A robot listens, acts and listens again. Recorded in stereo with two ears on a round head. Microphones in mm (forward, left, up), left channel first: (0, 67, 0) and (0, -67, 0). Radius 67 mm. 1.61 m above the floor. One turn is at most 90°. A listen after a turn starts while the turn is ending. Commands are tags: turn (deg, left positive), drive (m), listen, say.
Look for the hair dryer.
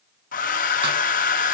<turn deg="65"/>
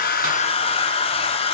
<turn deg="45"/>
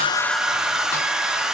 <say>Facing the hair dryer.</say>